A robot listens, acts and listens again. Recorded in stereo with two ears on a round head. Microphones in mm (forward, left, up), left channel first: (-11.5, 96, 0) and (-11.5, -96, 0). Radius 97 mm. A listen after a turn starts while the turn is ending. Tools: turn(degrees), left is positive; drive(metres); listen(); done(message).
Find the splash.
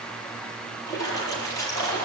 turn(degrees=15)
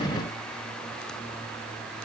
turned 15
listen()
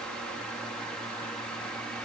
done("I heard a splash, but can't make it out now. It was about straight ahead or 150° left.")